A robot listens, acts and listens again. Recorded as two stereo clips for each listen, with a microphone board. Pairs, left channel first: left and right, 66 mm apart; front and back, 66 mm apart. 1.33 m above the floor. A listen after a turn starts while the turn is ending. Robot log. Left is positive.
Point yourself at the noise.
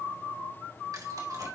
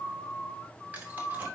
note: The keys jangling: 115° right.
cmd yaw -115
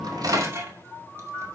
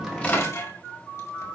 note: The keys jangling is now 40° right.
cmd yaw -40
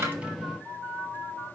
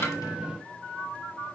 cmd idle
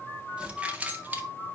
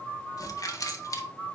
note: The keys jangling is now 25° right.
cmd yaw -25
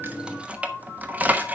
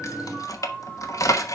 note: The keys jangling is now 25° right.
cmd yaw -25
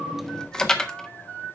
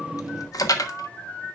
note: The keys jangling is now 10° left.
cmd yaw +10
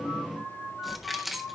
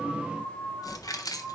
end: Found it: keys jangling, straight ahead.